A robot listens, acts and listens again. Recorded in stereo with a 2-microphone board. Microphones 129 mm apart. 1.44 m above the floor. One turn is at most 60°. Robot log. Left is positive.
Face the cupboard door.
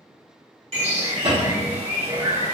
note: The cupboard door: about 50° right or 130° right.
cmd yaw -50
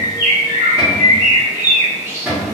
end: Found it: a cupboard door, straight ahead.